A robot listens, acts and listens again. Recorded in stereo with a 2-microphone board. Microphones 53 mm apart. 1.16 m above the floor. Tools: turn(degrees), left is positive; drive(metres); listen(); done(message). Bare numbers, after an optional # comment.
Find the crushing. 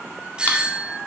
listen()
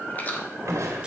turn(-90)
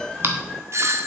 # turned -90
listen()
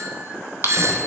listen()
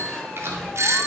done("Facing the crushing, 2 to 4 m away.")